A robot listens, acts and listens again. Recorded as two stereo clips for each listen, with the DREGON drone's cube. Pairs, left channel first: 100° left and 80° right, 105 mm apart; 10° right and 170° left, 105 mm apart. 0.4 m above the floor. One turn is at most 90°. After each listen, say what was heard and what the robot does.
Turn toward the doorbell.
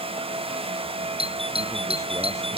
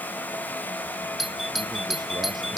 The doorbell: 105° right. Turn 90° right.
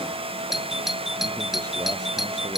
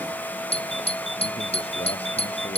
Facing the doorbell.